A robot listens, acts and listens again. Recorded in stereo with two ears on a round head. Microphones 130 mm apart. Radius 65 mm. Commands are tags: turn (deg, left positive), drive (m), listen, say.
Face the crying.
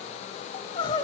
<turn deg="30"/>
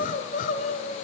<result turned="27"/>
<turn deg="115"/>
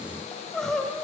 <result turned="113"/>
<say>Facing the crying, 1 to 2 m away.</say>